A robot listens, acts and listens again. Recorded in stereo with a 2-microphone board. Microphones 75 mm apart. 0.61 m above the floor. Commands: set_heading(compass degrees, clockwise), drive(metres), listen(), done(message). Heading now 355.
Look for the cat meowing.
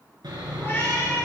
set_heading(320)
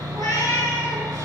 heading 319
set_heading(209)
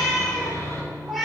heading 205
done("Facing the cat meowing.")